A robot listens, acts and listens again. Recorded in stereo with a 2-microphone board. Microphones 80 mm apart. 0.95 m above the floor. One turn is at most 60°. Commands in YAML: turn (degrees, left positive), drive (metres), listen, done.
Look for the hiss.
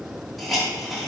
turn: 30
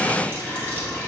listen: true
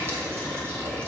listen: true
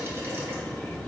done: "I heard a hiss, but can't make it out now. It was about 30° right or 150° left."